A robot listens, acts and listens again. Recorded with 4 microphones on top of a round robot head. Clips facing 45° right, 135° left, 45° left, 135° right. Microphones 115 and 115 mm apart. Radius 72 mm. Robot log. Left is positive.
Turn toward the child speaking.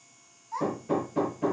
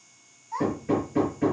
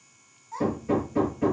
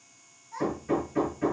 note: The child speaking: 70° left.
cmd yaw +70
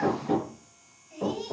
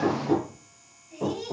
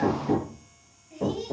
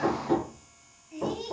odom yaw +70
note: The child speaking is now 30° left.
cmd yaw +30
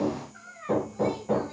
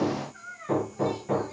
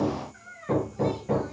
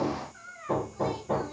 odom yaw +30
end: Found it: a child speaking, straight ahead, over 4 m away.